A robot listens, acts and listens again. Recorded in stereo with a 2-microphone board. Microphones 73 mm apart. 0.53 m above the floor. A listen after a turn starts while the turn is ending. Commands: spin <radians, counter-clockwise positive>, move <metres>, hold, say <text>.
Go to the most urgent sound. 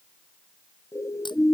spin 0.70
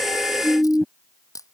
move 1.0
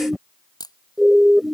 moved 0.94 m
move 1.0
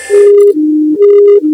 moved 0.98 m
move 1.0
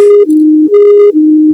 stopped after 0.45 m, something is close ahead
say Arrived at the siren, straight ahead.